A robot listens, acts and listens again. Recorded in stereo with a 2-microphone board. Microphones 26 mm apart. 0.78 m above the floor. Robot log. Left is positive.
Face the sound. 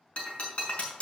note: The breaking glass: about 45° left or 135° left.
cmd yaw +45
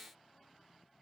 cmd idle
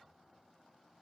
end: I heard breaking glass, but can't make it out now. It was about straight ahead or 90° left.